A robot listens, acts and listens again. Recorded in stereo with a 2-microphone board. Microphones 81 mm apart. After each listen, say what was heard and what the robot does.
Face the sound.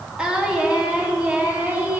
The singing: about 20° right or 160° right. Turn 20° right.
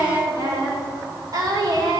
So it is at 130° right. Turn 130° right.
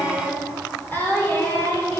The singing is now 25° left. Turn 25° left.
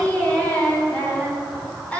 The singing is now 15° left. Turn 15° left.
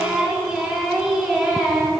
Found it: singing, straight ahead, 2 to 4 m away.